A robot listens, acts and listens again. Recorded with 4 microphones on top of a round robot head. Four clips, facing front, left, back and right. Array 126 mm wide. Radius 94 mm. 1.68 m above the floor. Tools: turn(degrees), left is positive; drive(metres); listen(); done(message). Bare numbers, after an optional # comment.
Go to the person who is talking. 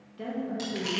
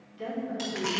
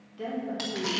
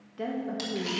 # The woman speaking: 80° right.
turn(-80)
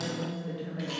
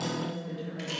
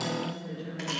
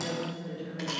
# The woman speaking is now 15° left.
turn(15)
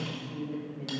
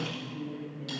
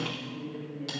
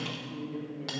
drive(1.0)
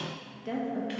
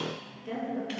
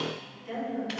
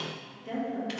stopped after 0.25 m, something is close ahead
done("Something is in my way. I am facing the woman speaking but have not reached it.")